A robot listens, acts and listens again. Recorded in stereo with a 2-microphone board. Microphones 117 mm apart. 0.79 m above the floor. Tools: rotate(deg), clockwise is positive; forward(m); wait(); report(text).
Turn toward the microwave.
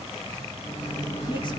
rotate(-55)
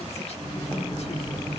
rotate(-50)
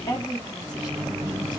report("Facing the microwave.")